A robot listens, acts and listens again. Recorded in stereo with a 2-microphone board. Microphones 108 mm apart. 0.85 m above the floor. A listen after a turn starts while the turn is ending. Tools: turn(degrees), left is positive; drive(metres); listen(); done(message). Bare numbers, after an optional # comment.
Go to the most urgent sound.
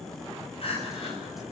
# The crying: about 55° left or 125° left.
turn(55)
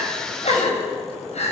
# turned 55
# So it is at 70° left.
turn(70)
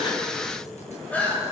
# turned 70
# The crying is now 10° left.
turn(10)
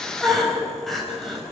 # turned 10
drive(1.0)
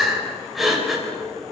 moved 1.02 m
drive(1.0)
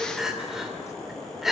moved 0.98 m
drive(1.0)
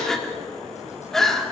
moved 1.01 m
drive(1.0)
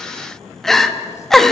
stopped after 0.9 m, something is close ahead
done("I am next to the crying.")